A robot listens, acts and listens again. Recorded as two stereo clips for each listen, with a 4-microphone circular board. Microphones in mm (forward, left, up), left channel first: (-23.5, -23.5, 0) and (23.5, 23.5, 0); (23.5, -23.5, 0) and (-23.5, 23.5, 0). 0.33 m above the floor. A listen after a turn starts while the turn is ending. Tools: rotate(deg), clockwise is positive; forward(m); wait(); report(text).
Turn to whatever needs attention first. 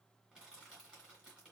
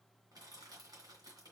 wait()
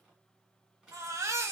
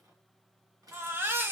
rotate(-80)
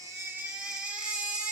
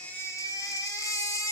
rotate(30)
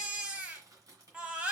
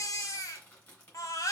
rotate(25)
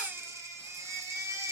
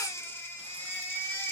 report("Found it: a baby crying, straight ahead, under 1 m away.")